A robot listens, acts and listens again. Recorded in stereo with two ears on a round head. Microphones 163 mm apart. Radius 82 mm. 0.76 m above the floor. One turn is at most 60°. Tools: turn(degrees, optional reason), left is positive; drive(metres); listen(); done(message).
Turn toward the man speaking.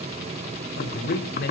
turn(degrees=55, reason="The man speaking: about 55° left or 125° left.")
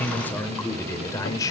turn(degrees=20, reason="So it is at 20° left.")
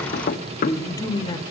turn(degrees=25, reason="The man speaking is now 25° left.")
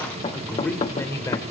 turn(degrees=15, reason="The man speaking is now 15° left.")
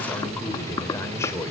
turn(degrees=15, reason="The man speaking is now 15° left.")
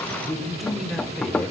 done("Facing the man speaking, 2 to 4 m away.")